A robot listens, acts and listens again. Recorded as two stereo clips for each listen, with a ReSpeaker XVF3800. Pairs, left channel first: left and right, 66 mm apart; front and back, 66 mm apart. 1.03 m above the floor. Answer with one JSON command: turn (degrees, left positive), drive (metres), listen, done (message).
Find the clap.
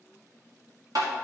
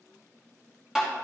{"listen": true}
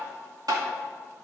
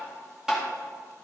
{"listen": true}
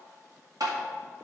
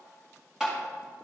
{"done": "I can't make out a clap, only tapping."}